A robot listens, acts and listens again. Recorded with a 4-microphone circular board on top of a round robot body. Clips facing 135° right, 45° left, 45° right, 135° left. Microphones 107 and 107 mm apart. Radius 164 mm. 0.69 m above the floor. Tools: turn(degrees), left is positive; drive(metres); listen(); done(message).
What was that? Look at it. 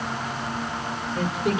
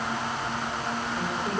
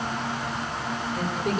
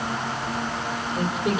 turn(degrees=-140)
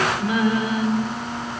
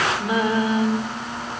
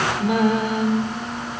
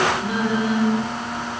turn(degrees=-15)
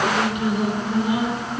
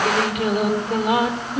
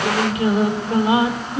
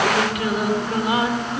turn(degrees=20)
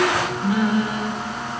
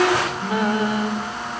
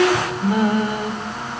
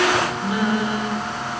done("Facing the singing.")